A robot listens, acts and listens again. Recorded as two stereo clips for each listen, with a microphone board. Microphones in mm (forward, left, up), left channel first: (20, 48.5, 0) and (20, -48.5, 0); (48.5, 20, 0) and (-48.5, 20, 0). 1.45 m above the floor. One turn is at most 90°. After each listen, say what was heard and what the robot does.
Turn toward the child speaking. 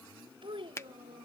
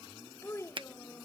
The child speaking: 60° right. Turn 60° right.
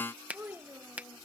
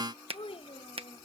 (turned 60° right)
The child speaking is now 20° right. Turn 20° right.
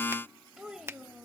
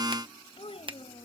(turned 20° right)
Facing the child speaking.